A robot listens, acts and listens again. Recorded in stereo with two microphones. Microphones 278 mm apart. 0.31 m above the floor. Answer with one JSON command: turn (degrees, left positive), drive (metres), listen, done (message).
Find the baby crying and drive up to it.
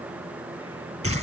{"listen": true}
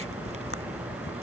{"listen": true}
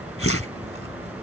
{"done": "I can't make out a baby crying, only a whoosh."}